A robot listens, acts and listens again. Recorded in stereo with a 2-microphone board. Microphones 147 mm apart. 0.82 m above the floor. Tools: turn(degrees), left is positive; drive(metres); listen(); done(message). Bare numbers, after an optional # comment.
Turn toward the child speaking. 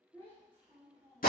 # The child speaking: about 25° left or 155° left.
turn(25)
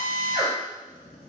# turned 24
listen()
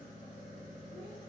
listen()
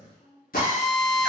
# So it is at 105° left.
turn(105)
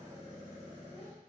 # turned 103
listen()
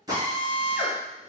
listen()
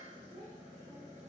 # The child speaking is now 35° right.
turn(-35)
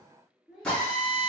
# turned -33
done("Found it: a child speaking, straight ahead.")